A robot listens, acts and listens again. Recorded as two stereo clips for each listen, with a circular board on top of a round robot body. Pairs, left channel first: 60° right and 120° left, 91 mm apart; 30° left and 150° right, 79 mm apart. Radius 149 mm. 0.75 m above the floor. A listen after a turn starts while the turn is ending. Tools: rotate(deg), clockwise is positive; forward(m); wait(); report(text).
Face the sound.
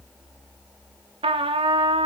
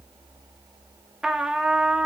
rotate(-125)
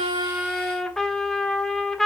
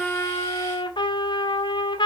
rotate(-25)
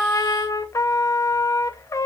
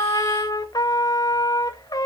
report("Found it: a trumpet, straight ahead, 1 to 2 m away.")